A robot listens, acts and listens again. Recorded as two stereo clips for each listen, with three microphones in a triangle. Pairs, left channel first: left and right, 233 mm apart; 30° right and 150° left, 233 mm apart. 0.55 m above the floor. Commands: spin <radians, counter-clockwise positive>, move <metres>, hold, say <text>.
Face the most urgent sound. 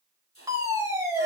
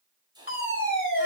spin -0.26
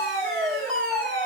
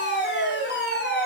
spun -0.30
say Facing the fire alarm, over 4 m away.